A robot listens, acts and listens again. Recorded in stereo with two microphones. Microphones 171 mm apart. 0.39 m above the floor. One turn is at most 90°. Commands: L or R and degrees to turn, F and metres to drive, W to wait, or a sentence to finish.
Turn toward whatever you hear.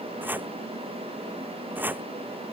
R30
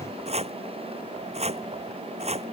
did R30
R90
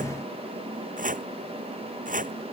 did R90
R50
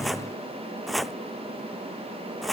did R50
Facing the chopping.